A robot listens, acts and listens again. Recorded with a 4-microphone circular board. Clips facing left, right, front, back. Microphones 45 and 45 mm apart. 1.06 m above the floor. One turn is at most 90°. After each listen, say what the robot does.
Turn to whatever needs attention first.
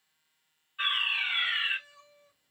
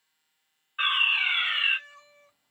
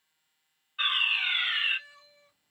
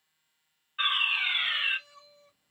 Turn 90° right.
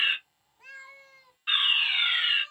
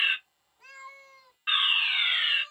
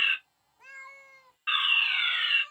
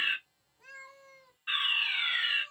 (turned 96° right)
Turn 25° right.
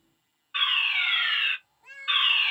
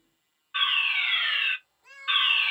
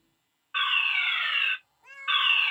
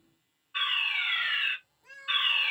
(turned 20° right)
Found it: a fire alarm, straight ahead.